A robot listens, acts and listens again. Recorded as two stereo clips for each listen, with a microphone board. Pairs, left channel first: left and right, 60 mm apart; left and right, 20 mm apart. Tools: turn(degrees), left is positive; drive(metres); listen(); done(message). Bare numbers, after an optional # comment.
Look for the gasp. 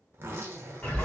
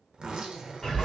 listen()
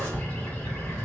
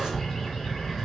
listen()
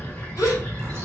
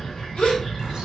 # The gasp: about 70° left or 110° left.
turn(70)
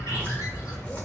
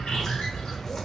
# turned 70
listen()
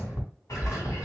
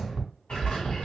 done("I heard a gasp, but can't make it out now. It was about straight ahead or 40° left.")